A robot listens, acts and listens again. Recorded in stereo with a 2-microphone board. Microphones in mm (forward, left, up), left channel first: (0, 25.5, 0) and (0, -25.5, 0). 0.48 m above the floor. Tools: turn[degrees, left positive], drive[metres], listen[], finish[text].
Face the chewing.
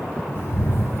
Action: listen[]
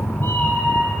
Action: listen[]
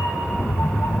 Action: finish[I can't make out chewing to turn to.]